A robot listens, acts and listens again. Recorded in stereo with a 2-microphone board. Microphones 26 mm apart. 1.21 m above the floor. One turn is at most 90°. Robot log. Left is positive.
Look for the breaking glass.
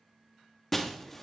cmd yaw +30
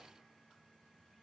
cmd idle
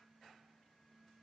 end: I heard breaking glass, but can't make it out now. It was about 20° right or 140° left.